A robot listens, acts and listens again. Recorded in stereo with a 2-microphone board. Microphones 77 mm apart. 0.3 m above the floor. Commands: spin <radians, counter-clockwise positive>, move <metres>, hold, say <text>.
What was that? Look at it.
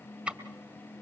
spin -0.26
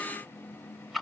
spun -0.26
say Facing the ticking, 2 to 4 m away.